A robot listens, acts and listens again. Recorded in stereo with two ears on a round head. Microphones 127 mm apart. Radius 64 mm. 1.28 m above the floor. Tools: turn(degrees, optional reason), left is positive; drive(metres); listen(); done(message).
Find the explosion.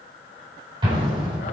turn(degrees=-35, reason="The explosion: about 35° right or 145° right.")
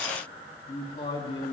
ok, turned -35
listen()
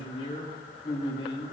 done("I heard an explosion, but can't make it out now. It was about straight ahead or 110° right.")